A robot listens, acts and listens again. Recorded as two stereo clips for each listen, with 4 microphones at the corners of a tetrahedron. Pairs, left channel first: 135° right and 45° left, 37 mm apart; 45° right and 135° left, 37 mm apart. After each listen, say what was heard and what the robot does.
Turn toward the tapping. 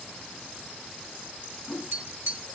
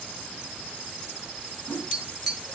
The tapping: 55° left. Turn 55° left.
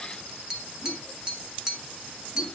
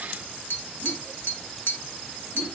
The tapping is now 25° right. Turn 25° right.
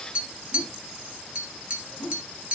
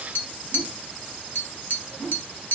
The tapping is now 10° right. Turn 10° right.
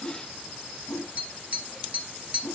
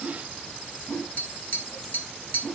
Facing the tapping, 1 to 2 m away.